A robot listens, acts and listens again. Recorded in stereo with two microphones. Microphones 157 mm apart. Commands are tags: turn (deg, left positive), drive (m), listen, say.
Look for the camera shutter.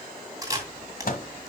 <turn deg="-20"/>
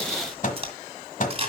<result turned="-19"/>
<turn deg="-140"/>
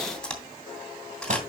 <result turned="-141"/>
<say>Facing the camera shutter.</say>